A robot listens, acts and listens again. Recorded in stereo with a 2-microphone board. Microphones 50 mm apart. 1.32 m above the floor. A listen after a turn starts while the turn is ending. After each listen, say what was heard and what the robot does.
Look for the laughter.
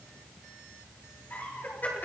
The laughter: about 35° left or 145° left. Turn 35° left.
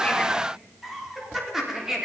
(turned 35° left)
So it is at 10° right. Turn 10° right.
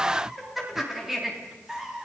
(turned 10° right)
The laughter is now 10° right. Turn 10° right.
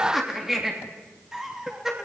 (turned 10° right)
The laughter is now 10° right. Turn 10° right.
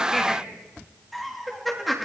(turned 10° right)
Found it: laughter, straight ahead.